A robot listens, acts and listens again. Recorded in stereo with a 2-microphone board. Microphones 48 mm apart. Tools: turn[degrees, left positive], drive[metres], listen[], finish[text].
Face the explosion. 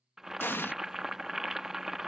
Thought: The explosion: about 55° left or 125° left.
Action: turn[55]
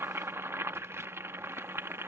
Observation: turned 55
Action: listen[]
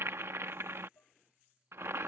Action: finish[I heard an explosion, but can't make it out now. It was about straight ahead or 70° left.]